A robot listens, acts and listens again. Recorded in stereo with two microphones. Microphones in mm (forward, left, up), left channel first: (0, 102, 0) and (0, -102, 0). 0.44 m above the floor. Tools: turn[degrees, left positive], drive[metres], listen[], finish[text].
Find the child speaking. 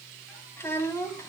Action: turn[30]
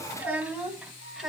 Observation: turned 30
Action: finish[Found it: a child speaking, straight ahead.]